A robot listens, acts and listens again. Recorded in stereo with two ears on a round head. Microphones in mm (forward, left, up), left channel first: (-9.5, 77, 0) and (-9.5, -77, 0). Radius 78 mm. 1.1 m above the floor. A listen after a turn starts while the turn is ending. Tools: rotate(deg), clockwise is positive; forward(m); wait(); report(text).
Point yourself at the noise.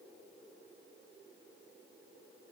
wait()
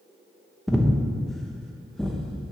rotate(-30)
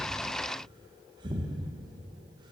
rotate(25)
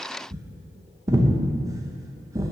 rotate(20)
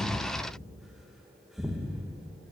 report("Found it: breathing, straight ahead, under 1 m away.")